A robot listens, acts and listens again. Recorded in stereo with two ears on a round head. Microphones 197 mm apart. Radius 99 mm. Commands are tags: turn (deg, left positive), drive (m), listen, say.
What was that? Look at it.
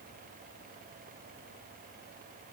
<listen/>
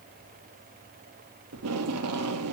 <turn deg="-90"/>
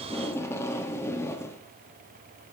<turn deg="10"/>
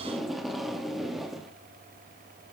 <say>Found it: tape being pulled, straight ahead.</say>